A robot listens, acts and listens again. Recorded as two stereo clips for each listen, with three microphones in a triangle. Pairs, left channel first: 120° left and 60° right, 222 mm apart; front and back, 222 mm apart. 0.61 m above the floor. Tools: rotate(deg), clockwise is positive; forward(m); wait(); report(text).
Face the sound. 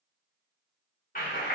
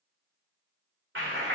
rotate(-165)
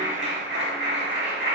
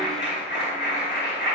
rotate(30)
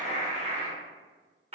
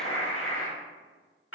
report("Found it: a clap, straight ahead.")